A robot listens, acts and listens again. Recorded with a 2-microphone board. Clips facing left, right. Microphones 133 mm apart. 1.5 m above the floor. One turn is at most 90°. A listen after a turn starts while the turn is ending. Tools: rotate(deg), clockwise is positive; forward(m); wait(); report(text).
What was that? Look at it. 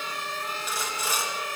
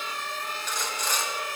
rotate(-30)
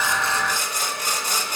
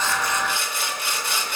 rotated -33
rotate(-90)
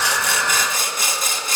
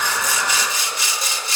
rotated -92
rotate(-50)
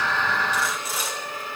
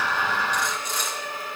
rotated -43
report("Facing the sawing.")